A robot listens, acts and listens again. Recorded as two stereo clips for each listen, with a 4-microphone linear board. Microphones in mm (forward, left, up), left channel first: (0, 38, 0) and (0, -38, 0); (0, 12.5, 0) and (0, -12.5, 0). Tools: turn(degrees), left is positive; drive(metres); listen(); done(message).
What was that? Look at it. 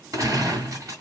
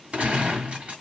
turn(degrees=-50)
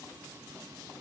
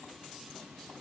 listen()
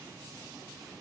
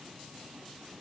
done("I heard a gunshot, but can't make it out now. It was about straight ahead or 80° right.")